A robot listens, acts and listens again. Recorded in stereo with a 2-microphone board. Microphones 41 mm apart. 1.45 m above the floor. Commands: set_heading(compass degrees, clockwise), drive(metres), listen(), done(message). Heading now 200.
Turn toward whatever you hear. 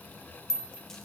set_heading(170)
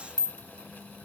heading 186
set_heading(31)
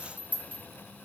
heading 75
set_heading(35)
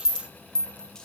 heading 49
set_heading(34)
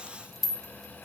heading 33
done("Found it: a rattle, straight ahead.")